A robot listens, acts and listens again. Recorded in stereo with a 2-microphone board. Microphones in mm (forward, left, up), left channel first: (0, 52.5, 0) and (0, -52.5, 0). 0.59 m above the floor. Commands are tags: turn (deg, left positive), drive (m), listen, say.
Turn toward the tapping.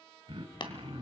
<turn deg="50"/>
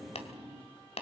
<turn deg="80"/>
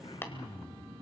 <turn deg="20"/>
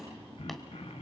<listen/>
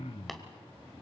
<listen/>
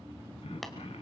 <say>I heard tapping from this way, but can't make it out now.</say>